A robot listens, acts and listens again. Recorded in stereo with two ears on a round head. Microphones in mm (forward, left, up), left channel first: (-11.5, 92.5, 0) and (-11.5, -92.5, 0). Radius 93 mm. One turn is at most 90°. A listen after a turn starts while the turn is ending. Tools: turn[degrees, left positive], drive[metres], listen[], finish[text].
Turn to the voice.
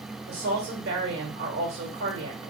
Thought: The woman speaking: about 55° right or 125° right.
Action: turn[-55]
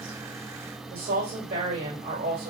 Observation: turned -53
Thought: So it is at 50° right.
Action: turn[-50]
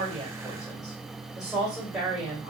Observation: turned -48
Action: finish[Facing the woman speaking.]